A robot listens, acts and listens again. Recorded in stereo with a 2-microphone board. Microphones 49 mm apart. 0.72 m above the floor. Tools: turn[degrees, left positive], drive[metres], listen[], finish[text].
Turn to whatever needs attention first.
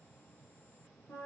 Action: listen[]
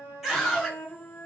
Action: turn[30]
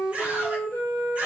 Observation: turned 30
Thought: So it is at 30° right.
Action: turn[-30]
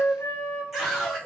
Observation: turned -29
Action: finish[Found it: a scream, straight ahead, 1 to 2 m away.]